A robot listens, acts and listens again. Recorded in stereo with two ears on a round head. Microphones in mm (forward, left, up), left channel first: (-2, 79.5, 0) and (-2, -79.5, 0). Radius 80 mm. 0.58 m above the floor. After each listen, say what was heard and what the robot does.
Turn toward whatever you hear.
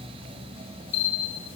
Turn 90° left.
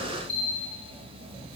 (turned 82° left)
So it is at 10° left. Turn 10° left.
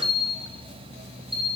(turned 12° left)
Facing the bell, 1 to 2 m away.